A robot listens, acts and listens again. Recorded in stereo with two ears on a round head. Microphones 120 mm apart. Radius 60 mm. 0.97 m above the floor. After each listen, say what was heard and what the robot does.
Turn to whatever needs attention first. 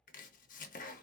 Keep listening.
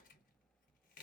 Keep listening.
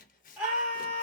Turn 30° right.
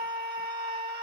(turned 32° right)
So it is at 140° right. Turn 140° right.
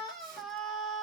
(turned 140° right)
Found it: a scream, straight ahead.